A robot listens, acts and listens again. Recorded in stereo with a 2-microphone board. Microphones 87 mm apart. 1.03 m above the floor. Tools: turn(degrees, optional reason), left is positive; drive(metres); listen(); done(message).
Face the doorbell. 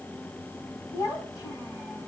listen()
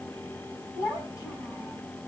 listen()
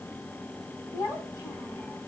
done("I can't make out a doorbell, only a child speaking.")